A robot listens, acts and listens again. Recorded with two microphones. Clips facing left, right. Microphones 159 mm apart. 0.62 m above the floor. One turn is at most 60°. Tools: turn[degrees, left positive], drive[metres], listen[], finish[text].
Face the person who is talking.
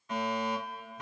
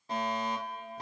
Action: listen[]
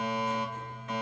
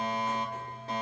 Action: listen[]
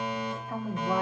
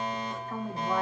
Action: turn[30]
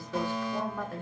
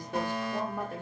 Thought: So it is at 20° right.
Action: turn[-20]
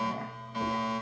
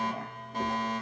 Action: listen[]
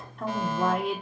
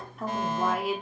Action: finish[Facing the woman speaking.]